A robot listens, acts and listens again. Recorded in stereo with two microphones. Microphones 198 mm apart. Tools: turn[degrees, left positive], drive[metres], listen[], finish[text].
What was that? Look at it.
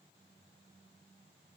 Action: listen[]
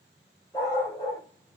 Thought: The dog barking: about 20° left or 160° left.
Action: turn[20]
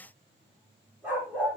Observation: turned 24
Action: finish[Found it: a dog barking, straight ahead.]